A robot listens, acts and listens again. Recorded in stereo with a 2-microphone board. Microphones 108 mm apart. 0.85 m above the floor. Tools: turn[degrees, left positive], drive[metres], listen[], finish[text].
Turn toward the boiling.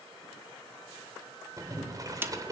Thought: The boiling: about 35° right or 145° right.
Action: turn[-35]
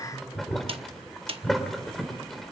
Action: finish[Found it: boiling, straight ahead.]